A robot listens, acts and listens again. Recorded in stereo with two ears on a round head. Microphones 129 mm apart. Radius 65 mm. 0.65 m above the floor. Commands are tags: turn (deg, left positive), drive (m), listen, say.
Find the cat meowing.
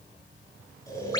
<listen/>
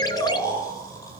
<listen/>
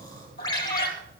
<turn deg="70"/>
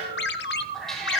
<say>Facing the cat meowing.</say>